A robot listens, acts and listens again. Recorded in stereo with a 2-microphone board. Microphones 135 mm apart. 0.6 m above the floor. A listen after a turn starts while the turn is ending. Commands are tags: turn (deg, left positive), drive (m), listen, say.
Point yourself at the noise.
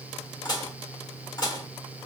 <turn deg="30"/>
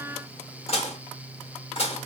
<turn deg="120"/>
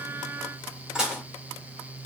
<say>Facing the dishes clattering.</say>